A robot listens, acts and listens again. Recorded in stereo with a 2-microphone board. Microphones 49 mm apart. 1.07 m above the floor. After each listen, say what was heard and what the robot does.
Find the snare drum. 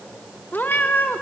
Keep listening.
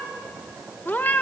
Keep listening.
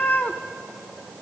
I can't make out a snare drum to turn to.